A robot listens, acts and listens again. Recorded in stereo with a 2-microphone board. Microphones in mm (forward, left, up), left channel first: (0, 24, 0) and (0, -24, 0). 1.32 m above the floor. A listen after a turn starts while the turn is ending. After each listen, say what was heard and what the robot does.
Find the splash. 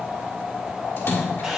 The splash: about 65° left or 115° left. Turn 65° left.
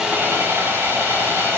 Keep listening.
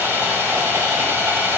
I heard a splash, but can't make it out now. It was about straight ahead or 50° left.